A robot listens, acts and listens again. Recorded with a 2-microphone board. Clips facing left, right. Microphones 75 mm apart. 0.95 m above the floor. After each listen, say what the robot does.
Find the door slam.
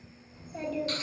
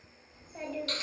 Keep listening.
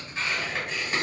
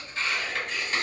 Keep listening.
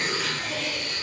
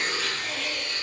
I can't make out a door slam, only a child speaking and tearing paper.